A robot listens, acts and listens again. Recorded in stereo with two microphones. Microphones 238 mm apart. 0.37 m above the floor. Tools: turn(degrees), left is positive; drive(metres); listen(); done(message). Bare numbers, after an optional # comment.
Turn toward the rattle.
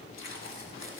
listen()
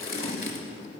listen()
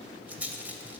turn(-30)
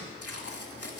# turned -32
listen()
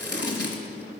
listen()
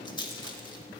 # So it is at 25° left.
turn(25)
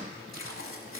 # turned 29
listen()
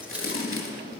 listen()
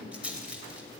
done("Found it: a rattle, straight ahead, under 1 m away.")